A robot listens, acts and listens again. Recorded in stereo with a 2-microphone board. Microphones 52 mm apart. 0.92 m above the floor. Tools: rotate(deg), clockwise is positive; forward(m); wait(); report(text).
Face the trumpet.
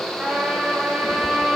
rotate(20)
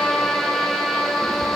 report("Found it: a trumpet, straight ahead, 2 to 4 m away.")